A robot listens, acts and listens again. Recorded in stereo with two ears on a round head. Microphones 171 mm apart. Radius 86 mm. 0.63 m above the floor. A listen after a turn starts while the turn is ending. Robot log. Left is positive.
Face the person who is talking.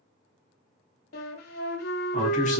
note: The man speaking: about 40° left or 140° left.
cmd yaw +40
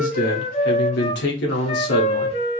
note: So it is at 95° left.
cmd yaw +95
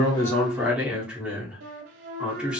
end: Found it: a man speaking, straight ahead.